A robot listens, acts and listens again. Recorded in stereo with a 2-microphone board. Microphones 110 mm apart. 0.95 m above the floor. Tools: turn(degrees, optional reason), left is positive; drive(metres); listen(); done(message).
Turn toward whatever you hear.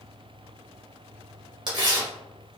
turn(degrees=-45, reason="The tearing paper: about 45° right or 135° right.")
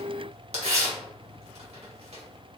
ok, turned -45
turn(degrees=-90, reason="So it is at 90° right.")
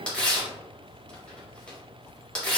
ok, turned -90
turn(degrees=10, reason="The tearing paper is now 10° left.")
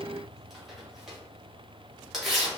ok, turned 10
done("Facing the tearing paper.")